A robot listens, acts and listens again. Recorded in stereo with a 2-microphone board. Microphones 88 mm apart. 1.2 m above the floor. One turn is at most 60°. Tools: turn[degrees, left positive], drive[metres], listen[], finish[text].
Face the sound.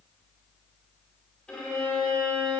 Action: turn[30]
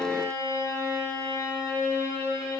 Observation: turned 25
Thought: So it is at 145° left.
Action: turn[60]
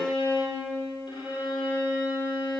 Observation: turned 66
Thought: The violin is now 80° left.
Action: turn[60]
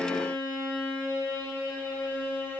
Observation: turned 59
Thought: The violin is now 20° left.
Action: turn[20]
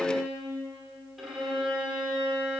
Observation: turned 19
Action: finish[Found it: a violin, straight ahead, over 4 m away.]